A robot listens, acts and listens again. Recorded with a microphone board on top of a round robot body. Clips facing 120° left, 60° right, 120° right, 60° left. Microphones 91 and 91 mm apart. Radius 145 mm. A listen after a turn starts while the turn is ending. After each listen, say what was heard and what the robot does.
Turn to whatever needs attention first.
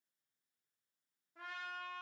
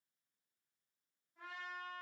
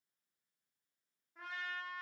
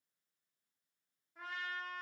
Keep listening.
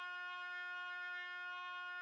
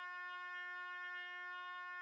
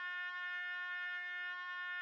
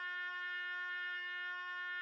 Keep listening.
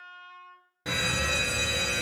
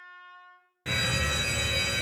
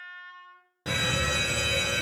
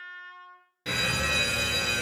The fire alarm: 170° right. Turn 170° right.
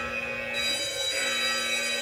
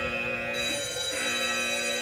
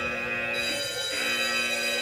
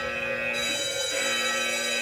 Facing the fire alarm.